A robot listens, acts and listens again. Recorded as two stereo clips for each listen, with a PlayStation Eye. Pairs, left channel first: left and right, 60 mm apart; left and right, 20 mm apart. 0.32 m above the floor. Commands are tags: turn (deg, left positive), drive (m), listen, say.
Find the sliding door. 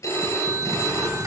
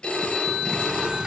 <turn deg="-70"/>
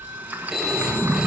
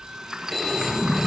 <turn deg="-30"/>
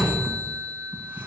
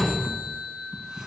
<turn deg="-30"/>
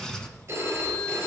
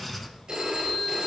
<turn deg="10"/>
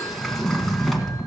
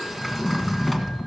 <say>Facing the sliding door, 1 to 2 m away.</say>